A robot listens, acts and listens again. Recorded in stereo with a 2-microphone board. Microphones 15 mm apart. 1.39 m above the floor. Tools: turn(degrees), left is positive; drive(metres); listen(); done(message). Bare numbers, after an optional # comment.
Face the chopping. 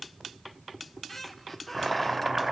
# The chopping: about 30° right or 150° right.
turn(-30)
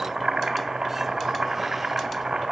# So it is at 120° right.
turn(-120)
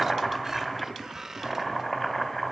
# The chopping is now 10° left.
turn(10)
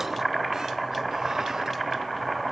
done("Facing the chopping, 2 to 4 m away.")